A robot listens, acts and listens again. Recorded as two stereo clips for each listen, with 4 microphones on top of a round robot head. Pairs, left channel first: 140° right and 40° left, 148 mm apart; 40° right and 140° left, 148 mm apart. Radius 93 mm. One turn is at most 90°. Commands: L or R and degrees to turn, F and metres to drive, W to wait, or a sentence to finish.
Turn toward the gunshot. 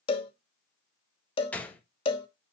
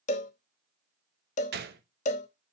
L90
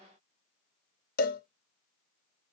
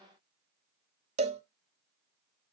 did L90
L50
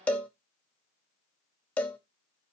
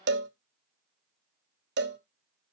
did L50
Facing where the gunshot came from. I can't hear it now.